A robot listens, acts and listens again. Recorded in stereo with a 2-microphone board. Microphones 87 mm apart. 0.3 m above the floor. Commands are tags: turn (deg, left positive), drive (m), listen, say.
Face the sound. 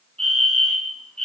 <turn deg="30"/>
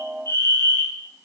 <turn deg="145"/>
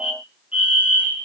<turn deg="-15"/>
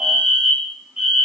<say>Facing the fire alarm.</say>